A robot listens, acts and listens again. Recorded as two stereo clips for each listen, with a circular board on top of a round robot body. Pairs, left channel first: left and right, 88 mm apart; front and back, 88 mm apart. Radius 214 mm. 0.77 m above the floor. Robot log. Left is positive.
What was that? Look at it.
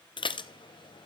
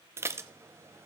note: The dishes clattering: 120° left.
cmd yaw +120
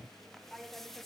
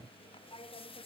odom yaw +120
end: Found it: dishes clattering, straight ahead, under 1 m away.